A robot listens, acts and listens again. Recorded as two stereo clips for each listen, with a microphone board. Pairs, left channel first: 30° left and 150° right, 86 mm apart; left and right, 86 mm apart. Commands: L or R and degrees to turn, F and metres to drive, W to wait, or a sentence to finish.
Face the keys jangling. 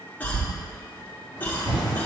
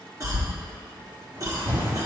R155
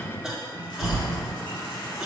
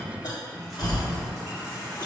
Found it: keys jangling, straight ahead, 2 to 4 m away.